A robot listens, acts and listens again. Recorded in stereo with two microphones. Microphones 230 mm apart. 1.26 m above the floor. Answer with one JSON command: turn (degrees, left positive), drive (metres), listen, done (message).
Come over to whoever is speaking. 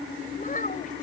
{"turn": 35}
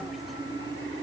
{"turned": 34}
{"listen": true}
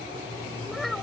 {"drive": 1.0}
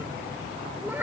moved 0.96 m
{"turn": -10}
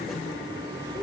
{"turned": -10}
{"listen": true}
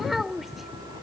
{"drive": 1.0}
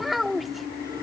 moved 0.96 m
{"drive": 1.0}
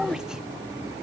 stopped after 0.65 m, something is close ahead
{"done": "Arrived at the child speaking, straight ahead."}